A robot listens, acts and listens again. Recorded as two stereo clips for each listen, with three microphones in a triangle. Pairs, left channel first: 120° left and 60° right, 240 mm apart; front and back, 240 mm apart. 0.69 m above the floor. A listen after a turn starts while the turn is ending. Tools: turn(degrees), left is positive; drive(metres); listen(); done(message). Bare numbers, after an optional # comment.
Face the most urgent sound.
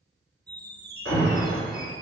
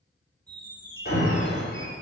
# The alarm: 45° right.
turn(-45)
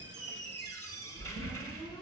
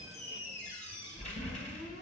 listen()
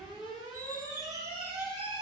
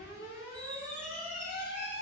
# The alarm is now 10° left.
turn(10)
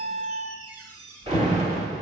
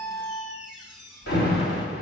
done("Found it: an alarm, straight ahead, 2 to 4 m away.")